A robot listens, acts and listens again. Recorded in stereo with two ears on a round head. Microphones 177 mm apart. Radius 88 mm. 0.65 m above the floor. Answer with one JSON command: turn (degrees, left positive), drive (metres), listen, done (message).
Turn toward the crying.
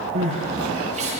{"turn": -35}
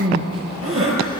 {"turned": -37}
{"turn": -110}
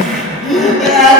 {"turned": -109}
{"done": "Facing the crying, over 4 m away."}